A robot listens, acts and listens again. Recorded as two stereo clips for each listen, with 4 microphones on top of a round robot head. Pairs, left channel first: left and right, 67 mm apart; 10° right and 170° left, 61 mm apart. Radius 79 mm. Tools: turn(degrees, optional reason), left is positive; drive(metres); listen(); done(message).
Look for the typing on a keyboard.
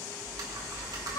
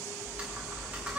turn(degrees=-120, reason="The typing on a keyboard: 120° right.")
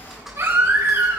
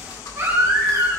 done("Found it: typing on a keyboard, straight ahead, 2 to 4 m away.")